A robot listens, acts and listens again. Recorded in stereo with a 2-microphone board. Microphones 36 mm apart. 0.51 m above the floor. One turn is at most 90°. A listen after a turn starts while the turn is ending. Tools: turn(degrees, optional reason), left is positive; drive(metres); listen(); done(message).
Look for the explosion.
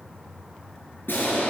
turn(degrees=90)
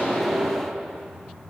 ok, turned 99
turn(degrees=-25, reason="So it is at 25° right.")
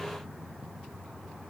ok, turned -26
done("I heard an explosion from this way, but can't make it out now.")